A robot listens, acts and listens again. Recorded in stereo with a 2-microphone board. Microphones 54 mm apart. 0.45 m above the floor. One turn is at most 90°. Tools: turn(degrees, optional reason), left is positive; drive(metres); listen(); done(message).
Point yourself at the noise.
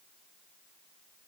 listen()
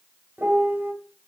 turn(degrees=-50, reason="The piano: about 50° right or 130° right.")
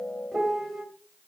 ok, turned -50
done("Found it: a piano, straight ahead.")